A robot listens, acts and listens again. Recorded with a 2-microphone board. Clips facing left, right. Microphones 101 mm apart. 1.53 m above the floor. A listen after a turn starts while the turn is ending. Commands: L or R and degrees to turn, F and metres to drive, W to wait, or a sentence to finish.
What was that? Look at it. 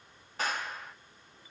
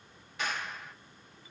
L40
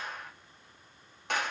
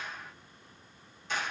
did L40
L95
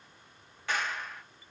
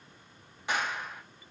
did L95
R20
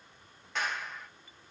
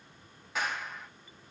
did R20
Found it: a clap, straight ahead, under 1 m away.